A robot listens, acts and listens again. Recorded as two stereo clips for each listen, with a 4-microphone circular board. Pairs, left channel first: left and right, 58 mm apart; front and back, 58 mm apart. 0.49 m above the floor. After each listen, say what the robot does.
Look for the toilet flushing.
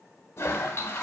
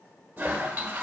Turn 125° left.
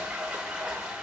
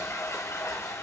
Turn 20° right.
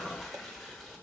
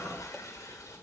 Found it: a toilet flushing, straight ahead, 1 to 2 m away.